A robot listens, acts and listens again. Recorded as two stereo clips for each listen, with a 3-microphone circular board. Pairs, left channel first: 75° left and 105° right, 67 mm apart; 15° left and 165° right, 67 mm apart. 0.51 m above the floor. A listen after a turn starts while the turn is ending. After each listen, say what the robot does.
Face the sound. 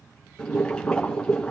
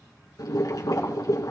Found it: boiling, straight ahead, 2 to 4 m away.